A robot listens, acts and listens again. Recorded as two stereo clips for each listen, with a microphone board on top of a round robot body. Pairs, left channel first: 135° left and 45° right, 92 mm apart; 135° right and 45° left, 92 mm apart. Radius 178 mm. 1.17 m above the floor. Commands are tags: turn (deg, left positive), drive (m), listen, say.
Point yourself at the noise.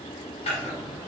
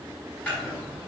<turn deg="150"/>
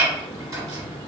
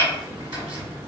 <listen/>
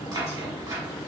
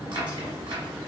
<say>Facing the chopping.</say>